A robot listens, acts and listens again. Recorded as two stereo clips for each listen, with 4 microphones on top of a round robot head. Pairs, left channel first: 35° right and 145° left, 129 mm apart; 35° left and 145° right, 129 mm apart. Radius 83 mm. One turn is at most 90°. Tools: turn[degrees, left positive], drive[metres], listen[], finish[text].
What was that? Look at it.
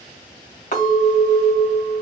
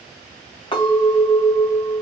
Thought: The clink: 10° right.
Action: turn[-10]
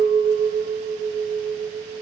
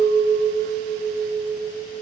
Action: finish[Found it: a clink, straight ahead.]